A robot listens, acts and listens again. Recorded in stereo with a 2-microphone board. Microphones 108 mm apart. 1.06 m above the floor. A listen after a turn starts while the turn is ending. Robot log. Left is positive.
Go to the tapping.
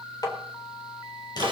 note: The tapping: about 35° left or 145° left.
cmd yaw +35
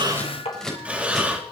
note: So it is at 110° left.
cmd yaw +110
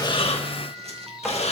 cmd idle
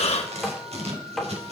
cmd fwd 1.0
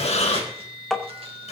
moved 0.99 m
cmd fwd 1.0
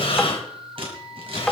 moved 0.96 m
cmd fwd 1.0
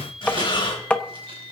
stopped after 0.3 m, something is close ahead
note: The tapping is now 10° left.
cmd yaw +10
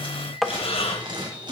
end: I am next to the tapping.